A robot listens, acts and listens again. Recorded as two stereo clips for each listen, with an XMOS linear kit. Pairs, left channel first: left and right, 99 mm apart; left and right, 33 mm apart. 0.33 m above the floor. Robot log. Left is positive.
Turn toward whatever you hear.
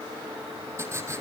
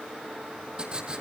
note: The writing: about 30° right or 150° right.
cmd yaw -30
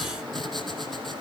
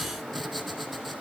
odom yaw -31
end: Found it: writing, straight ahead, 2 to 4 m away.